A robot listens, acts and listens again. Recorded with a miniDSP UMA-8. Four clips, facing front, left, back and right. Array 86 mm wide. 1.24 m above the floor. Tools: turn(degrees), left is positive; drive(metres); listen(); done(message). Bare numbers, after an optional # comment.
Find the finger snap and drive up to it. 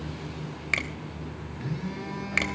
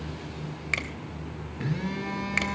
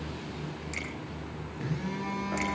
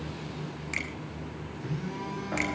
# The finger snap: 30° left.
turn(30)
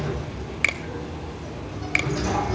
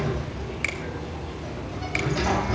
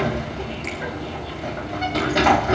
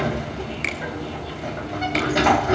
drive(1.0)
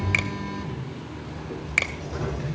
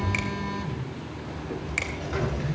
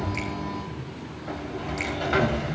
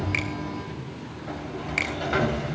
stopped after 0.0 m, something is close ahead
done("Something is in my way. I am facing the finger snap but have not reached it.")